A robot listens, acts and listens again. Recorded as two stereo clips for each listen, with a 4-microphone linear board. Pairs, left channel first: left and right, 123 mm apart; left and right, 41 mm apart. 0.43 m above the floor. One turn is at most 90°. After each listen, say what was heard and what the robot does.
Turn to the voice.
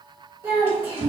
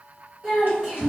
The child speaking: about 20° right or 160° right. Turn 20° right.
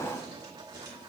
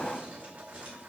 Keep listening.
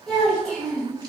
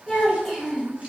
Found it: a child speaking, straight ahead.